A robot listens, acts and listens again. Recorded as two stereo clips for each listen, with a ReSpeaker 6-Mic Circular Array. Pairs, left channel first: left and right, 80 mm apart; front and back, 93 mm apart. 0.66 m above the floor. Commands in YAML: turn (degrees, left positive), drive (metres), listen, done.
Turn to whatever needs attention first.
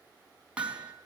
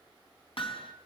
listen: true
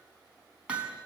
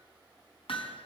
listen: true
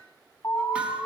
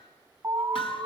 turn: 115
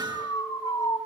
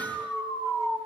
turn: 55
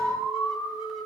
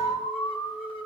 done: "Facing the alarm, over 4 m away."